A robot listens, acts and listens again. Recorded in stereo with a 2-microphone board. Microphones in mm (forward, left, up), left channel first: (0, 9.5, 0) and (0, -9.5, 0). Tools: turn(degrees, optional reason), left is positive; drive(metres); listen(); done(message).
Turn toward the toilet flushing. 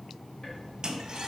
turn(degrees=-45, reason="The toilet flushing: about 45° right or 135° right.")
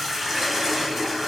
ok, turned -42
done("Found it: a toilet flushing, straight ahead, 1 to 2 m away.")